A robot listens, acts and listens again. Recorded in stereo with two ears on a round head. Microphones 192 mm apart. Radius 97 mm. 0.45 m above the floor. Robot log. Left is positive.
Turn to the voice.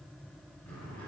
cmd idle
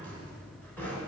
cmd idle
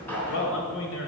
note: The man speaking: about 65° left or 115° left.
cmd yaw +65
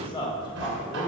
note: So it is at 25° left.
cmd yaw +25
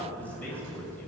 note: The man speaking is now 10° left.
cmd yaw +10
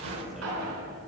cmd idle
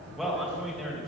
end: Facing the man speaking, 2 to 4 m away.